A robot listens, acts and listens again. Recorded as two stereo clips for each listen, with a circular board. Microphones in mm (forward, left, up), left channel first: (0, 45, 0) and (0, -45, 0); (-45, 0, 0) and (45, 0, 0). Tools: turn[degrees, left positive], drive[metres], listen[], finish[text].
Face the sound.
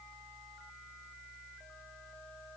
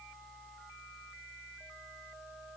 Action: listen[]
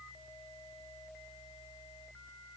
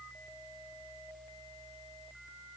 Action: listen[]
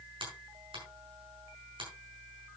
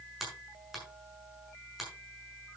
Thought: The finger snap: 85° right.
Action: turn[-85]
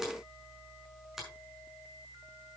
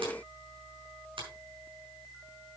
Action: finish[Found it: a finger snap, straight ahead.]